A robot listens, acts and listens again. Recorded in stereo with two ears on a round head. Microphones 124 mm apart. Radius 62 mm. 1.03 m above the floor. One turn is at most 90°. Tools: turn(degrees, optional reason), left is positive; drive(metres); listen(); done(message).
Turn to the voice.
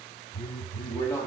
turn(degrees=25, reason="The man speaking: about 25° left or 155° left.")
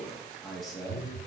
done("Found it: a man speaking, straight ahead.")